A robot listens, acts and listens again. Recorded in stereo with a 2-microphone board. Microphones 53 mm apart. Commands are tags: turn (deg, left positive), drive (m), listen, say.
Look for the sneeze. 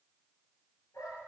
<listen/>
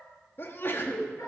<turn deg="45"/>
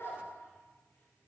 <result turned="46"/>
<listen/>
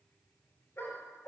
<say>I heard a sneeze, but can't make it out now. It was about straight ahead or 90° left.</say>